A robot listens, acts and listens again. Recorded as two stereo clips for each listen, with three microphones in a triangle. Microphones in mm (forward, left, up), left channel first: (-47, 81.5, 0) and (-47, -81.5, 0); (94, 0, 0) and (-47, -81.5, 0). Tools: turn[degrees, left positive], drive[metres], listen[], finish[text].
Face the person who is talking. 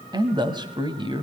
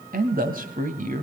Thought: The man speaking: 145° right.
Action: turn[-145]
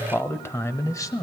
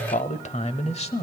Thought: The man speaking is now 40° left.
Action: turn[40]
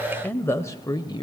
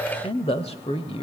Thought: The man speaking is now 50° left.
Action: turn[50]
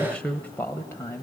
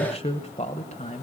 Thought: The man speaking is now 25° left.
Action: turn[25]
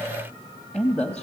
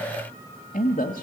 Thought: The man speaking is now 10° left.
Action: turn[10]
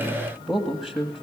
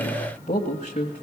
Action: finish[Found it: a man speaking, straight ahead, 1 to 2 m away.]